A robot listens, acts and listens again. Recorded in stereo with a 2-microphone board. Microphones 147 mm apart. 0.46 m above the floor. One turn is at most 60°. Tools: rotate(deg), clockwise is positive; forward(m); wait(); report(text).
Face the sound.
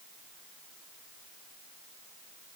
wait()
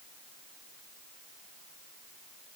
wait()
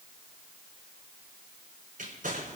rotate(60)
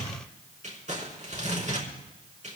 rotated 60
rotate(55)
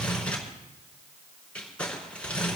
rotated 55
rotate(-10)
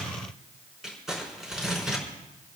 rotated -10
report("Facing the crumpling, over 4 m away.")